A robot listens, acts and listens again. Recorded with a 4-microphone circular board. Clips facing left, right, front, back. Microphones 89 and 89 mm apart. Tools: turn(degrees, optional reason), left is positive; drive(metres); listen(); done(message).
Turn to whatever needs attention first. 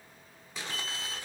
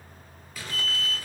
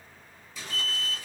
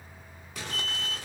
turn(degrees=-25, reason="The alarm: 25° right.")
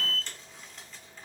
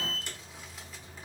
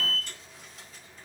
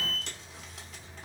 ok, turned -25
done("Found it: an alarm, straight ahead.")